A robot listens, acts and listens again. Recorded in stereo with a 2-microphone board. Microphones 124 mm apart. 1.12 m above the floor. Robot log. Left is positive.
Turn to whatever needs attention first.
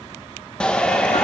cmd yaw +30
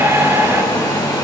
note: So it is at 20° right.
cmd yaw -20
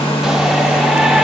end: Found it: a shout, straight ahead.